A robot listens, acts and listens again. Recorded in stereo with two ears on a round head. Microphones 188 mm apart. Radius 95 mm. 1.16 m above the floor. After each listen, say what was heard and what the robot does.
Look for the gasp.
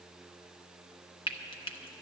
Keep listening.
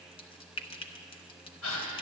Turn 90° left.
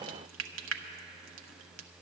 I heard a gasp from this way, but can't make it out now.